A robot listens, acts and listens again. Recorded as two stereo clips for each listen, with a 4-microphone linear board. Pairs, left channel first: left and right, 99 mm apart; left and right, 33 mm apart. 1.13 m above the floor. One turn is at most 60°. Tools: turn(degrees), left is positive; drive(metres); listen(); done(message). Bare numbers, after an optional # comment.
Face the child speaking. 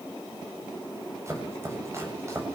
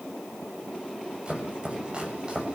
listen()
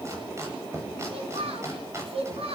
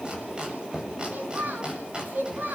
turn(-60)
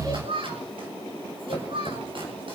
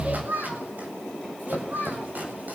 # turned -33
# So it is at 70° right.
turn(-60)
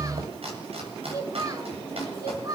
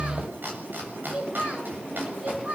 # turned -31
# The child speaking is now 40° right.
turn(-40)
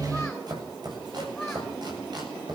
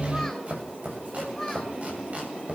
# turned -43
listen()
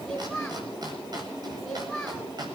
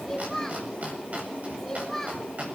done("Facing the child speaking, over 4 m away.")